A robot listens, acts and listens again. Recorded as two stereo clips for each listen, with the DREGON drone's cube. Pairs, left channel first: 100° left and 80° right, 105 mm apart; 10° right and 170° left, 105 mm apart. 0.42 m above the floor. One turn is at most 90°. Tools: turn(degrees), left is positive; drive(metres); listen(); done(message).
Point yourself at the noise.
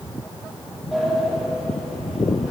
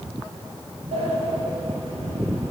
turn(degrees=-90)
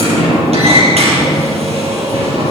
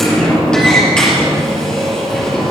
turn(degrees=-90)
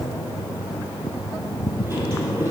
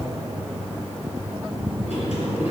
turn(degrees=-15)
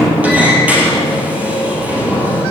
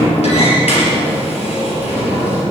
done("Found it: a sliding door, straight ahead.")